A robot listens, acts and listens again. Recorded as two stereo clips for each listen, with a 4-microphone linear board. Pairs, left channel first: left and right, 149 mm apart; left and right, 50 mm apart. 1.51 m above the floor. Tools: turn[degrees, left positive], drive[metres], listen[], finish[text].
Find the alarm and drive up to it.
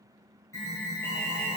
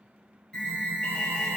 Thought: The alarm: about 20° left or 160° left.
Action: turn[20]
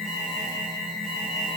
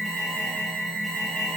Action: drive[1.0]
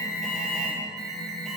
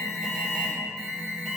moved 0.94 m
Action: drive[1.0]
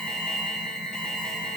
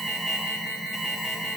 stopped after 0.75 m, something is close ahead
Action: finish[Arrived at the alarm, straight ahead.]